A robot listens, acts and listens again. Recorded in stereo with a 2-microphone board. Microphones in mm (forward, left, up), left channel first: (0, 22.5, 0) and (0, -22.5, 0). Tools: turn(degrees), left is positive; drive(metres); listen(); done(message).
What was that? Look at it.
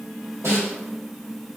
turn(degrees=-90)
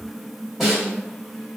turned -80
done("Found it: a snare drum, straight ahead.")